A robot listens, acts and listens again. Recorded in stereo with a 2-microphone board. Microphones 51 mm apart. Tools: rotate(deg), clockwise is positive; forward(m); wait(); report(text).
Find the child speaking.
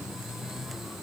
wait()
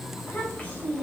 rotate(-35)
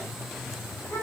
rotate(-110)
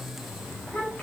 rotate(-35)
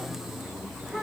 wait()
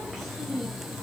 report("Facing the child speaking.")